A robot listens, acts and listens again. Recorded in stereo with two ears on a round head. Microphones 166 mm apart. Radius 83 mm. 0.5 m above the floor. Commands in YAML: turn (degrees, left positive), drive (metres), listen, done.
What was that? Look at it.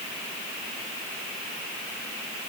listen: true
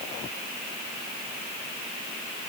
listen: true
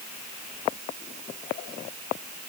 done: "I can't make out anything to turn to."